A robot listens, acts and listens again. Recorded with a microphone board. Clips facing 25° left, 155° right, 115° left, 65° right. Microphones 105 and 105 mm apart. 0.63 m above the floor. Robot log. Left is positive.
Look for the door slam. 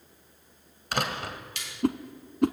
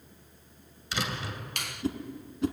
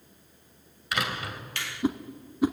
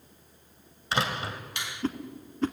note: The door slam: 10° right.
cmd yaw -10
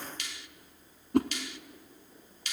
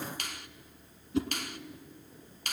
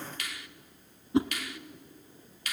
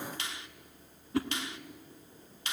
end: I heard a door slam from this way, but can't make it out now.